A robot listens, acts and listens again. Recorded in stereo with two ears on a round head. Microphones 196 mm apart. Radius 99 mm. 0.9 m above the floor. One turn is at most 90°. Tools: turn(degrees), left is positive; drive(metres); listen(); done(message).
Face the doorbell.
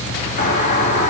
turn(degrees=35)
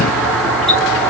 done("Facing the doorbell, over 4 m away.")